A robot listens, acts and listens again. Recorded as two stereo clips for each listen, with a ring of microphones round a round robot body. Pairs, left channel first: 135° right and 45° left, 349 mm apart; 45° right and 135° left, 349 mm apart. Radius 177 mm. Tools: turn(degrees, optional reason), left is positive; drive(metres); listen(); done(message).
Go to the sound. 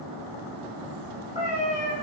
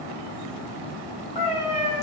turn(degrees=-65, reason="The cat meowing: 65° right.")
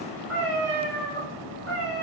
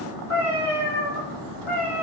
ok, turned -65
drive(metres=1.0)
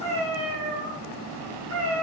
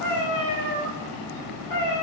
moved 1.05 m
drive(metres=1.0)
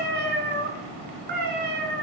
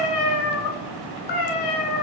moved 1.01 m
turn(degrees=-20, reason="The cat meowing is now 20° right.")
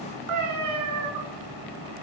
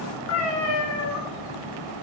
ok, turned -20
drive(metres=1.0)
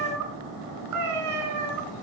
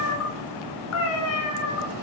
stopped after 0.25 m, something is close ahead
done("Arrived at the cat meowing, straight ahead.")